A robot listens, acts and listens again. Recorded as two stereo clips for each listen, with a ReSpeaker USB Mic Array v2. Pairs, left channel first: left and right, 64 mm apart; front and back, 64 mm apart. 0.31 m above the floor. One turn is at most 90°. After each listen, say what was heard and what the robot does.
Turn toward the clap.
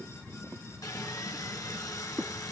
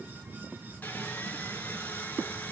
Keep listening.
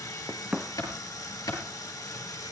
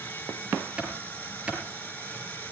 The clap: 105° left. Turn 90° left.
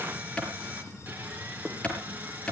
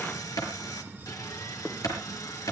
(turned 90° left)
The clap is now 15° left. Turn 15° left.
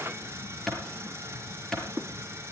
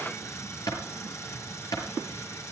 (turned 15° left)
Found it: a clap, straight ahead.